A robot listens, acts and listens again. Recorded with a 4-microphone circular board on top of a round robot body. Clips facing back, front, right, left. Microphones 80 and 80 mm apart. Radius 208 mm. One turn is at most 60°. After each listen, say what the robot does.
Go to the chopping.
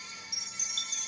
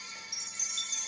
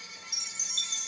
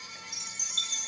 Keep listening.
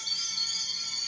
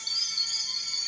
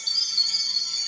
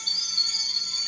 Keep listening.
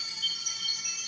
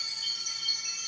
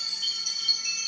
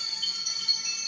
I can't make out chopping to turn to.